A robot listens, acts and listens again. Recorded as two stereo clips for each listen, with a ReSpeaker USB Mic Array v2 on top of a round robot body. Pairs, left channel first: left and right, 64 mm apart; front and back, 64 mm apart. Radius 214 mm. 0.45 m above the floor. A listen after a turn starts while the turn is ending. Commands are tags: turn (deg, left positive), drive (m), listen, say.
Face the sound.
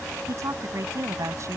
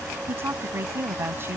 <turn deg="-130"/>
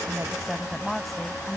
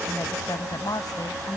<say>Found it: a woman speaking, straight ahead.</say>